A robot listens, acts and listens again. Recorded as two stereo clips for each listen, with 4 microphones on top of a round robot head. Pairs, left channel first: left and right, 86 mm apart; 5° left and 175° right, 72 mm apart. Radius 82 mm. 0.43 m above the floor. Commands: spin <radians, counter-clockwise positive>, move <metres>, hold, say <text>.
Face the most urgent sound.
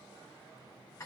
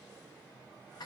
hold
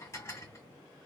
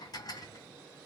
hold
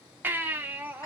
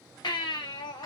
spin -0.35
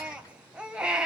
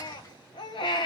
spin -0.17
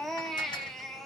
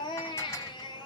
say Facing the baby crying.